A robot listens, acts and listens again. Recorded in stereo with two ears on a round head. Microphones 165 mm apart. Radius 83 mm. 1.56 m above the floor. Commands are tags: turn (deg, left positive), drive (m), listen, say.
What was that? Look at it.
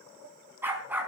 <turn deg="-30"/>
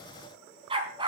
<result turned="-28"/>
<turn deg="-155"/>
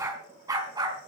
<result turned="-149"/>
<turn deg="-20"/>
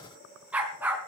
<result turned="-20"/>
<turn deg="-10"/>
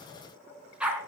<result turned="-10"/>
<say>Found it: a dog barking, straight ahead, over 4 m away.</say>